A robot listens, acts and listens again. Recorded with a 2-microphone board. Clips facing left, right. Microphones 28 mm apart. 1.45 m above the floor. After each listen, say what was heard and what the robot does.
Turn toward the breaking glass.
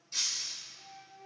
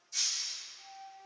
The breaking glass: about 60° left or 120° left. Turn 60° left.
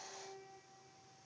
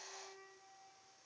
Keep listening.
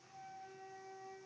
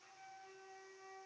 I heard breaking glass, but can't make it out now. It was about straight ahead or 60° left.